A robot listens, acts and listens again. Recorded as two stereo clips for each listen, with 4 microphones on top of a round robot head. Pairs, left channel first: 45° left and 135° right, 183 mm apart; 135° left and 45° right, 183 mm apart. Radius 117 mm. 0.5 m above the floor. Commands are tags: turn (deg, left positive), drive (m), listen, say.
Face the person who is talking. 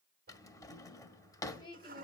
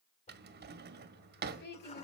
<turn deg="110"/>
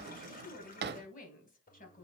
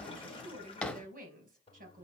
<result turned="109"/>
<say>Found it: a woman speaking, straight ahead, over 4 m away.</say>